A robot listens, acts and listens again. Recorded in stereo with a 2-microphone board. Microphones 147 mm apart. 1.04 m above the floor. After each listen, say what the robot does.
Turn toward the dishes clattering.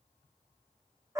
Keep listening.
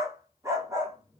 Keep listening.
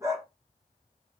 I can't make out dishes clattering to turn to.